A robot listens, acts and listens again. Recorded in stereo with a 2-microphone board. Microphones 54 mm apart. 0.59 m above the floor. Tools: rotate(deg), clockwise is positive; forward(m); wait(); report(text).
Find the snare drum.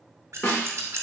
rotate(-40)
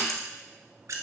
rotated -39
wait()
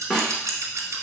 report("Facing the snare drum.")